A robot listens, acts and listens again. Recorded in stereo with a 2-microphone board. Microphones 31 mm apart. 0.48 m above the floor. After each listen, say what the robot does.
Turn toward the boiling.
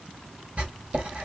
Keep listening.
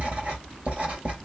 Keep listening.
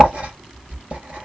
I can't make out boiling to turn to.